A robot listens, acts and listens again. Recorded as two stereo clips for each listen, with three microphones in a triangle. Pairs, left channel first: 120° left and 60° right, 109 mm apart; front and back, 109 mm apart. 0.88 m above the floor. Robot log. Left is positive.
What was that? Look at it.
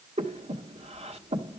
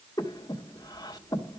note: The breathing: 50° right.
cmd yaw -50
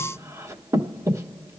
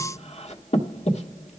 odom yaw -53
end: Found it: breathing, straight ahead.